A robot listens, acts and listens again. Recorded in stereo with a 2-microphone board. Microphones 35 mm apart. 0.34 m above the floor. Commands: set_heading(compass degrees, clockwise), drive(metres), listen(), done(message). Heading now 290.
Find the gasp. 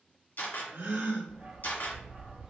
set_heading(20)
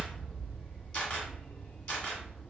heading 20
done("Facing where the gasp came from. I can't hear it now.")